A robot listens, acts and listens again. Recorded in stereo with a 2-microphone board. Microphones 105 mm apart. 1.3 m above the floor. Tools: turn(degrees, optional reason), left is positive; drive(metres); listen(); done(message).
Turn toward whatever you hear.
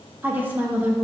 turn(degrees=-20, reason="The woman speaking: about 20° right or 160° right.")
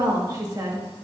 turn(degrees=-145, reason="So it is at 145° right.")
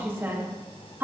turn(degrees=-20, reason="The woman speaking is now 20° right.")
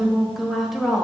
done("Found it: a woman speaking, straight ahead, 1 to 2 m away.")